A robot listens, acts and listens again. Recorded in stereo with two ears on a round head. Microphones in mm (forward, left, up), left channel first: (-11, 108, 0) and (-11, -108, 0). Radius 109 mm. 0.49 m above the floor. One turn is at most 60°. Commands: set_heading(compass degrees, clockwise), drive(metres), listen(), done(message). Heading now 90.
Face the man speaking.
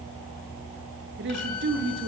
set_heading(140)
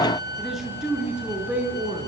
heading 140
done("Found it: a man speaking, straight ahead, over 4 m away.")